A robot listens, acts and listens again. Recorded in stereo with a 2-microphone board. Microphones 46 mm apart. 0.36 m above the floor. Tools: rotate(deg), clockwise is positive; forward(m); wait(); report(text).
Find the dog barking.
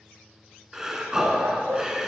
rotate(90)
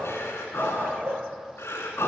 rotate(45)
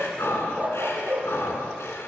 rotate(35)
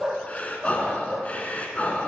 report("Found it: a dog barking, straight ahead, 2 to 4 m away.")